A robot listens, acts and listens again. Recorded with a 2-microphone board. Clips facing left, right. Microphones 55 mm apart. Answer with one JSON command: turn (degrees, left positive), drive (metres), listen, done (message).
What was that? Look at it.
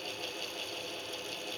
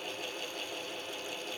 {"listen": true}
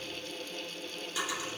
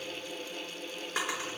{"turn": -55}
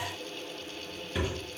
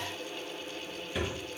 {"done": "Found it: a drawer, straight ahead, 2 to 4 m away."}